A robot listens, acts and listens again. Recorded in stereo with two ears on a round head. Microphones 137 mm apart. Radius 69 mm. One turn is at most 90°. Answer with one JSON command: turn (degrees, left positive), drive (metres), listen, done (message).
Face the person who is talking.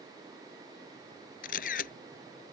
{"listen": true}
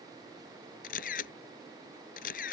{"listen": true}
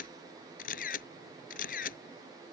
{"done": "I can't make out anyone speaking, only a camera shutter."}